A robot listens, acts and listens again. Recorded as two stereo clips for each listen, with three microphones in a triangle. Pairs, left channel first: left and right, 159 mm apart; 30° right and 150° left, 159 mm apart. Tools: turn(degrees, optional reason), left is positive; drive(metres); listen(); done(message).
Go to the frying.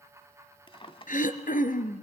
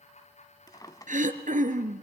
listen()
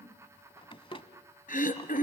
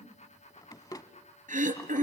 listen()
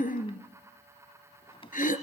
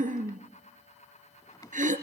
done("I can't make out frying to turn to.")